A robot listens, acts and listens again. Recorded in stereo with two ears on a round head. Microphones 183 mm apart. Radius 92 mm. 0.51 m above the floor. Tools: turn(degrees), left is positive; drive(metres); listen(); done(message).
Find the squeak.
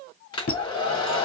turn(degrees=45)
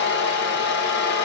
listen()
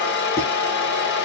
listen()
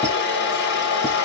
done("I heard a squeak, but can't make it out now. It was about straight ahead or 90° left.")